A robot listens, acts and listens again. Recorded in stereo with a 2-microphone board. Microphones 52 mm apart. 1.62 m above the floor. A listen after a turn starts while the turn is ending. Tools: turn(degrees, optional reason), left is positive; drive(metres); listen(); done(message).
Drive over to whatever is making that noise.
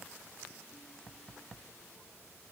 listen()
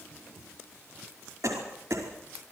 turn(degrees=-90)
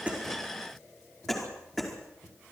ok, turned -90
drive(metres=1.0)
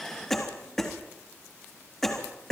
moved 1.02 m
drive(metres=1.0)
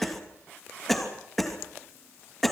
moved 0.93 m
drive(metres=1.0)
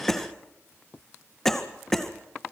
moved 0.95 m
drive(metres=1.0)
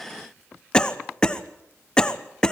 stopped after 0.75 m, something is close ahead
turn(degrees=15, reason="The cough is now 15° left.")
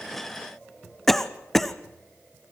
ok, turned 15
done("I am next to the cough.")